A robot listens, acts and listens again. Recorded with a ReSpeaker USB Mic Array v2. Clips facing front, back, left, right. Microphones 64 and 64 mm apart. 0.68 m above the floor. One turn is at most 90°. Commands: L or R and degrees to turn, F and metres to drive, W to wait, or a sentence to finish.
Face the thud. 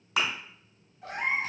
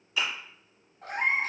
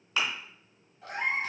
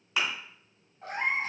R15
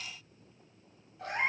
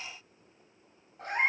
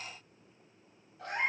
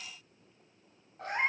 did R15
I heard a thud from this way, but can't make it out now.